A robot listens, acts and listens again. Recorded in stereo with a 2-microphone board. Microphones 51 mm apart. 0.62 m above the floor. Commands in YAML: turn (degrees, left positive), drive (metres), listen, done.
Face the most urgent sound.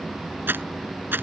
listen: true
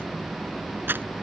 listen: true
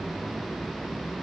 done: "I can't make out anything urgent to turn to."